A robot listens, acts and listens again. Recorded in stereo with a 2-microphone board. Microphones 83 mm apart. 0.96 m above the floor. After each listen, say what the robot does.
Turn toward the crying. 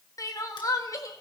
Turn 45° left.
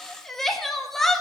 Facing the crying.